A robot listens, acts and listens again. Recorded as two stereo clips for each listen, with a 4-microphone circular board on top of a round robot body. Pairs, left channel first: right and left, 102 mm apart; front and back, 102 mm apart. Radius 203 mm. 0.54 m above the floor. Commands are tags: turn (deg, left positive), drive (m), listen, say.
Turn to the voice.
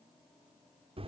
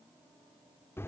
<listen/>
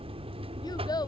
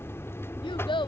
<turn deg="-40"/>
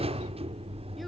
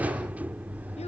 <listen/>
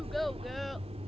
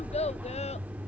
<listen/>
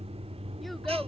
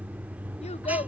<say>I heard a child speaking from this way, but can't make it out now.</say>